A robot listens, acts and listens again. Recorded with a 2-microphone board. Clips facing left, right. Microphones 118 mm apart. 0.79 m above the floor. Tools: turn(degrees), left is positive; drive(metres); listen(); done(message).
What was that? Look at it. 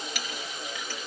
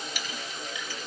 turn(degrees=90)
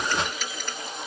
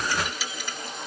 done("Facing the clink, over 4 m away.")